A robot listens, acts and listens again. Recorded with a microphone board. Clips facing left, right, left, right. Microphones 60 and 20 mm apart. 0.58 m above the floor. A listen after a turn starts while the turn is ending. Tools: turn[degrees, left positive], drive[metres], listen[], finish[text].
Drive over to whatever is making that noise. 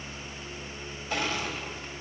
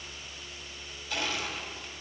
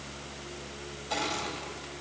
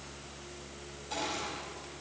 Thought: The crushing: about 40° left or 140° left.
Action: turn[40]
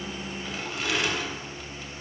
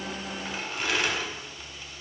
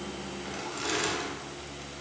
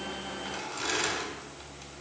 Action: drive[1.0]
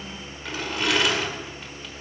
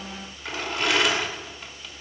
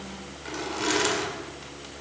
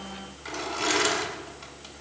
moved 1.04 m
Action: drive[1.0]
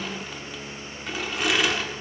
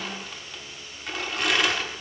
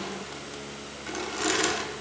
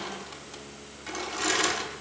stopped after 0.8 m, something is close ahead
Action: finish[I am next to the crushing.]